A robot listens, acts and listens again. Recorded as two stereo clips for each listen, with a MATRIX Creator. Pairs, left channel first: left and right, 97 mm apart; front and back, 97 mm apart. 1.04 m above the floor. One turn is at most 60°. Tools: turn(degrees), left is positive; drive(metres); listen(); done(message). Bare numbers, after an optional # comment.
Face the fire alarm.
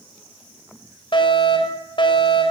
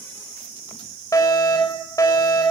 # The fire alarm: 55° left.
turn(55)
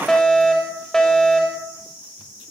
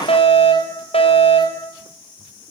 done("Facing the fire alarm.")